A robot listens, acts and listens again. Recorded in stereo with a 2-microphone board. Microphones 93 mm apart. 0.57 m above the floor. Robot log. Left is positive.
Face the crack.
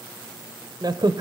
note: The crack: about 50° right or 130° right.
cmd yaw -50
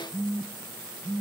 cmd idle
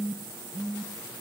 end: I heard a crack, but can't make it out now. It was about straight ahead or 80° right.